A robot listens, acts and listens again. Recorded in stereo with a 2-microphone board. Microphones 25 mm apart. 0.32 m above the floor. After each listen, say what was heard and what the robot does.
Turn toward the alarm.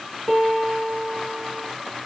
Keep listening.
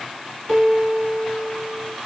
Keep listening.
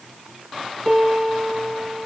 I can't make out an alarm to turn to.